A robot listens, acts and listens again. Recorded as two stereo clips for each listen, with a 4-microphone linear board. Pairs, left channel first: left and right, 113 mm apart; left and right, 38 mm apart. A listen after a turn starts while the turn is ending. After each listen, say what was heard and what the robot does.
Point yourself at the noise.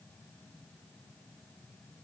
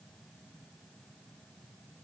Keep listening.
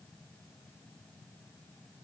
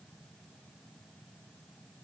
Keep listening.
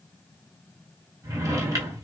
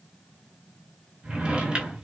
The drawer: about 30° right or 150° right. Turn 30° right.
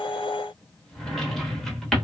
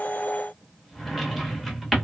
Found it: a drawer, straight ahead.